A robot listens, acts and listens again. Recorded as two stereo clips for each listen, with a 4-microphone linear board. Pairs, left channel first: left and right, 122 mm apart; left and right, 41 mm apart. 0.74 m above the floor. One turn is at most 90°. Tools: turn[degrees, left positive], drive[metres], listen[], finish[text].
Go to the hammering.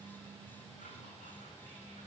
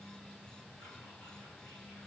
Action: listen[]
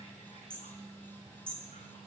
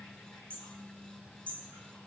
Thought: The hammering: about 35° left or 145° left.
Action: turn[35]
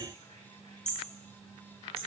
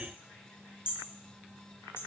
Thought: So it is at 110° left.
Action: turn[90]
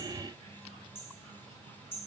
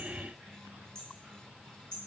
Thought: The hammering is now 20° left.
Action: turn[20]
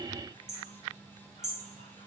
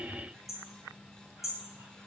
Action: drive[1.0]
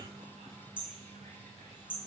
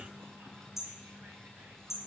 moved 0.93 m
Thought: The hammering is now 10° right.
Action: turn[-10]
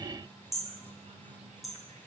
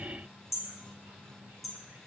Action: drive[1.0]
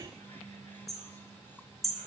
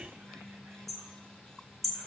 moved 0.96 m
Action: drive[1.0]
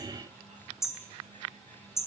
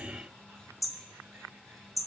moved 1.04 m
Action: drive[1.0]
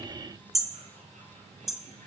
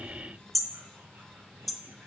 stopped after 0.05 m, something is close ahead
Action: finish[Arrived at the hammering, straight ahead.]